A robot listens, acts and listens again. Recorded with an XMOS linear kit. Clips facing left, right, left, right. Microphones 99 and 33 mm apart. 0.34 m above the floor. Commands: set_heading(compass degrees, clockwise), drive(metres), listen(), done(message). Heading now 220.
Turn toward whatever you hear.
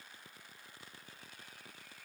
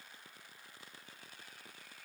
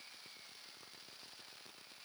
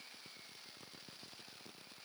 listen()
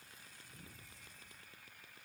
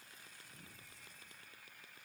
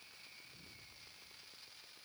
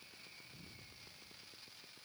listen()
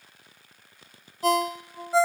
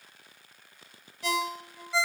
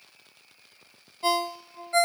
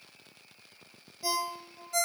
set_heading(175)
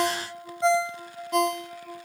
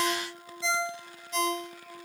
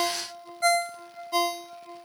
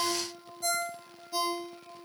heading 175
set_heading(100)
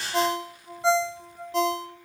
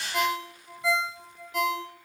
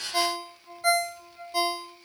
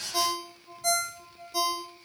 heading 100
set_heading(60)
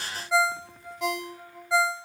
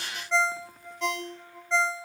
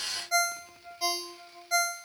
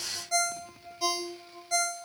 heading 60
set_heading(45)
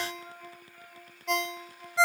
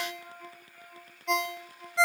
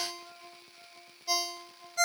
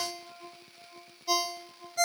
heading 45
done("Facing the ringtone, under 1 m away.")